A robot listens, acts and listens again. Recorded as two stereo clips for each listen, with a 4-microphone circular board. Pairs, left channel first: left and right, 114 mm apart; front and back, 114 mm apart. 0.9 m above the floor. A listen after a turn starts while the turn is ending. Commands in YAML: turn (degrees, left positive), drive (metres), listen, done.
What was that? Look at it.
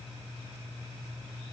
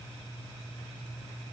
listen: true
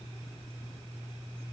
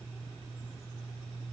listen: true
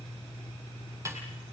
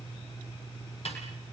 turn: -25
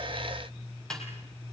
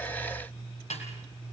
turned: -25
done: "Found it: a snare drum, straight ahead, over 4 m away."